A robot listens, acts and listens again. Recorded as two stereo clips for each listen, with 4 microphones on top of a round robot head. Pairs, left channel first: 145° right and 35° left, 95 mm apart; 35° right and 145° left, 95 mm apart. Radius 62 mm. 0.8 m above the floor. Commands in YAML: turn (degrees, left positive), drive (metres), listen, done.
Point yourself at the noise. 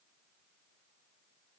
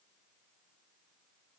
listen: true
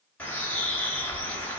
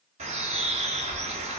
turn: 140
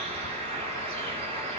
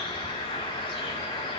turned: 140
done: "Found it: a bird, straight ahead, 2 to 4 m away."